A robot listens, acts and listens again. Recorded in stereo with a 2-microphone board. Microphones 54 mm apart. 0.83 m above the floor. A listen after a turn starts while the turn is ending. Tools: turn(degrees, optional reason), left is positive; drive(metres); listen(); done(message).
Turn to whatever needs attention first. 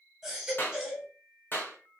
turn(degrees=-30)
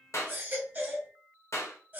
turn(degrees=-140, reason="So it is at 140° right.")
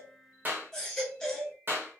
turn(degrees=15, reason="The baby crying is now 15° left.")
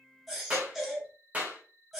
done("Found it: a baby crying, straight ahead.")